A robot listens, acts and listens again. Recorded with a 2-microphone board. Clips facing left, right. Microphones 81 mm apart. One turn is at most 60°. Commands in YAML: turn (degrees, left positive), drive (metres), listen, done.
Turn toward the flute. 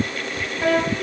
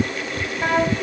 turn: -30
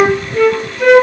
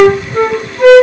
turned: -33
turn: -60
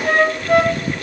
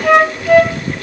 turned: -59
turn: -60
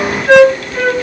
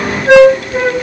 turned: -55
turn: -30
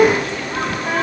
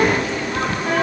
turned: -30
listen: true
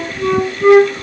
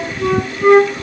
done: "Facing the flute."